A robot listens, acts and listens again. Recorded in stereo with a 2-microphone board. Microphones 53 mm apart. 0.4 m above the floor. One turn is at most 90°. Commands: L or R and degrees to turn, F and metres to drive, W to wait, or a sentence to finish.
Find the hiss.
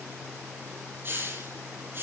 R40
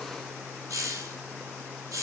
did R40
R90
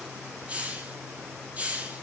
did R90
R25
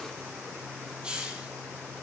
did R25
R20
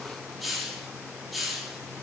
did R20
Facing the hiss.